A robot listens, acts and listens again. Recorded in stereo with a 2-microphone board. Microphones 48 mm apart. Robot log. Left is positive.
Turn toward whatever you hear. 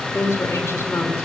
note: The woman speaking: about 70° left or 110° left.
cmd yaw +70
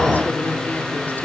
note: So it is at 40° left.
cmd yaw +40
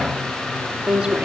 note: The woman speaking is now 25° right.
cmd yaw -25
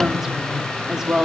note: The woman speaking is now 10° right.
cmd yaw -10
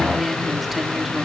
end: Facing the woman speaking.